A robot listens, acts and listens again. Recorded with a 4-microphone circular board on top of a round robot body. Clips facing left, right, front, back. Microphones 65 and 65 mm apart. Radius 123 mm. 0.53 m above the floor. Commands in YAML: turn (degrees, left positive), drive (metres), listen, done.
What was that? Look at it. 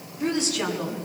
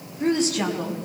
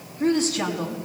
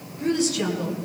turn: -45
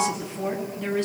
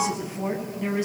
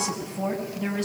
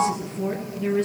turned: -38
turn: -15
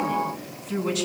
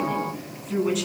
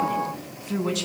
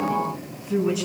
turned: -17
done: "Found it: a woman speaking, straight ahead, over 4 m away."